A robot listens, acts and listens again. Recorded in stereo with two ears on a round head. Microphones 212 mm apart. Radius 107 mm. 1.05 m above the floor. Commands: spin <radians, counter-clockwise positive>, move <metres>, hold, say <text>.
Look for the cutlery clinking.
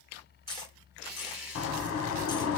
spin 0.35
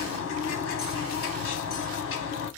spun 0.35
hold
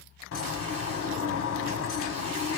hold
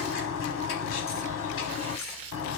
say I heard cutlery clinking, but can't make it out now. It was about straight ahead or 140° left.